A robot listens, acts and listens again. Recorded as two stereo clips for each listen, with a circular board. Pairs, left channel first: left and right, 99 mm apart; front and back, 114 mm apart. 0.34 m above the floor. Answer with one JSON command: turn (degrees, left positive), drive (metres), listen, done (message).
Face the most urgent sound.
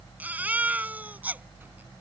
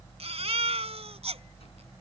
{"turn": -160}
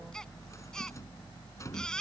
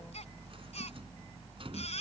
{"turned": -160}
{"turn": 10}
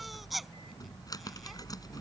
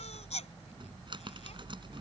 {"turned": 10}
{"done": "Found it: a baby crying, straight ahead."}